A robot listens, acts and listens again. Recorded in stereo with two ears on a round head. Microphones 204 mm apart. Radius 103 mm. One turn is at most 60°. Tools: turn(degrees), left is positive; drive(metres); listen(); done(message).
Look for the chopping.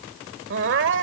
listen()
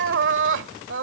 listen()
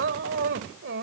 done("I can't make out chopping to turn to.")